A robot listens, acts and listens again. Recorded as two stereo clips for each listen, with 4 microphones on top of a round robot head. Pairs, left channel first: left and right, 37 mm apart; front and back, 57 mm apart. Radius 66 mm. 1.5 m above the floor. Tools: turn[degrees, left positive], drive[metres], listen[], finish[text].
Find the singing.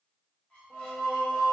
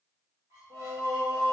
Thought: The singing: 165° right.
Action: turn[-165]
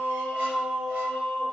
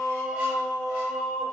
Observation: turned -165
Thought: The singing is now 75° right.
Action: turn[-75]
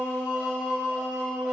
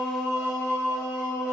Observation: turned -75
Thought: The singing is now 20° left.
Action: turn[20]
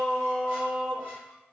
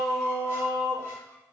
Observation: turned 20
Action: finish[Found it: singing, straight ahead.]